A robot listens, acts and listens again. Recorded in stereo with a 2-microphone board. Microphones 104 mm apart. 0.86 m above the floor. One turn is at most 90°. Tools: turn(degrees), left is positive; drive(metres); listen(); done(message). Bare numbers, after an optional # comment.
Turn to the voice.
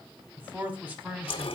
# The man speaking: about 20° right or 160° right.
turn(-20)
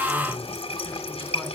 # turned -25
listen()
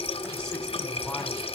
listen()
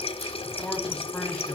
done("I heard a man speaking, but can't make it out now. It was about 5° left or 135° right.")